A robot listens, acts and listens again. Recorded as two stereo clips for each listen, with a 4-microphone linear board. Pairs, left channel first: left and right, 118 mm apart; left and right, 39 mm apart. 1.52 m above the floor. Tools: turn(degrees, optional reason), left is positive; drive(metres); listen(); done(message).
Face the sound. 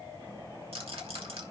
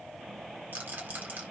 turn(degrees=-50, reason="The rattle: about 50° right or 130° right.")
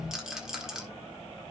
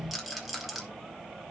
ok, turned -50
done("Facing the rattle.")